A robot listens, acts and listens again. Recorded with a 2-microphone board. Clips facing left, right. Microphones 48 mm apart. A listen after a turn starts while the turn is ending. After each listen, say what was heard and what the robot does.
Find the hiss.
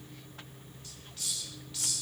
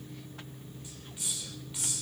The hiss: about 20° right or 160° right. Turn 20° right.
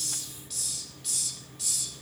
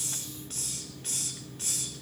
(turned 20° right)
So it is at 140° right. Turn 140° right.
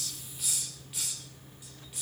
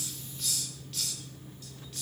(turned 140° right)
The hiss is now 15° left. Turn 15° left.
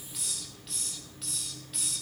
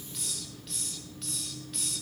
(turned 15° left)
Facing the hiss.